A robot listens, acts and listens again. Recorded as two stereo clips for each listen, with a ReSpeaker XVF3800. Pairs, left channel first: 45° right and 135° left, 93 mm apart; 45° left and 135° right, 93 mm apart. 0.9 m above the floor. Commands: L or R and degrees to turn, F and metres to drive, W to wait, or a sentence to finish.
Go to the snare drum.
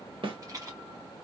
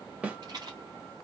L150
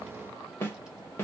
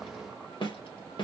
L20
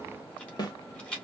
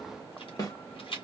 F1.0
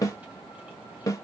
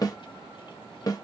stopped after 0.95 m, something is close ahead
I am next to the snare drum.